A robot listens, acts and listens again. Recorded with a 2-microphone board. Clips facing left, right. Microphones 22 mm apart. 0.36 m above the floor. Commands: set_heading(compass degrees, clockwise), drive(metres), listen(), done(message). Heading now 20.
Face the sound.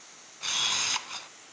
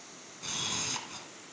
set_heading(345)
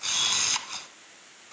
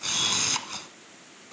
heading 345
done("Facing the camera shutter.")